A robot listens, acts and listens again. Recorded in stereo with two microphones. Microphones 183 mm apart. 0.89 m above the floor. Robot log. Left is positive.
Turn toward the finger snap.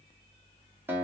cmd idle
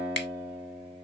cmd yaw +90
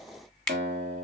end: Facing the finger snap.